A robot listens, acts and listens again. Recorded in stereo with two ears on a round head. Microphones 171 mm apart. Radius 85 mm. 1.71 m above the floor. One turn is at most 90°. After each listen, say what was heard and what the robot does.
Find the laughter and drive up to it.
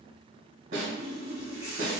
Keep listening.
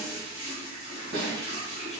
Keep listening.
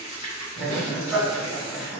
Turn 30° left.
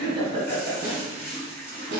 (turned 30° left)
So it is at 30° right. Turn 30° right.
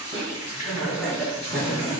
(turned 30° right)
Drive 1.0 m forward.
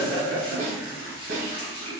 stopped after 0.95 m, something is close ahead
I am next to the laughter.